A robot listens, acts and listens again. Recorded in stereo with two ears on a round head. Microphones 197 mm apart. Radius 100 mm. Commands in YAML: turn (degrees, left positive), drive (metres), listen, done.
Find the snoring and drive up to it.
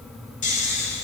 turn: 35
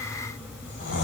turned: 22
turn: 125
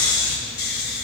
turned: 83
turn: 45
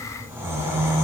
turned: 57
turn: -10
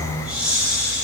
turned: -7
drive: 1.0
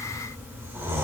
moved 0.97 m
turn: -10
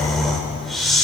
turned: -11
drive: 1.0
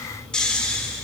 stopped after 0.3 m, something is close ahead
done: "Arrived at the snoring, straight ahead."